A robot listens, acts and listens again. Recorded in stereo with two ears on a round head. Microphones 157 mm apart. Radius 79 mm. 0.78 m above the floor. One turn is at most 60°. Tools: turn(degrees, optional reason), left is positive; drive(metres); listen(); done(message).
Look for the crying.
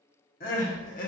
turn(degrees=50, reason="The crying: about 50° left or 130° left.")
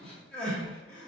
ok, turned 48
done("Facing the crying, 1 to 2 m away.")